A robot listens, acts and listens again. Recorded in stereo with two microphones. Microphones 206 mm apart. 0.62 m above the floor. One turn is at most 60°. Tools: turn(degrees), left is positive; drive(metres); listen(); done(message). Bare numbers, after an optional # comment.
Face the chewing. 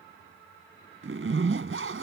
listen()
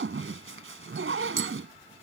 listen()
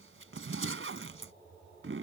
done("I can't make out chewing, only a zipper.")